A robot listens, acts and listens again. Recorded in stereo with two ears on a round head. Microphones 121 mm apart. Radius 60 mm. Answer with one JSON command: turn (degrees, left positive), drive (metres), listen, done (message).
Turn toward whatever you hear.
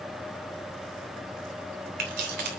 {"turn": -90}
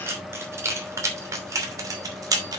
{"turn": -30}
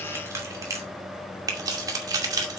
{"turn": -30}
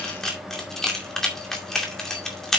{"done": "Found it: keys jangling, straight ahead."}